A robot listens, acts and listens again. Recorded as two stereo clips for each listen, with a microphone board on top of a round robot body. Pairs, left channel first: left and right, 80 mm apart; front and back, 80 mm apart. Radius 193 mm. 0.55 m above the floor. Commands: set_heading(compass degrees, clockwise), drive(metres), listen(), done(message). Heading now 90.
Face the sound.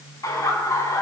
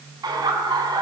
set_heading(310)
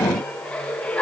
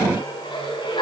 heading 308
set_heading(293)
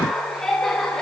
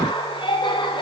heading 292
done("Facing the laughter.")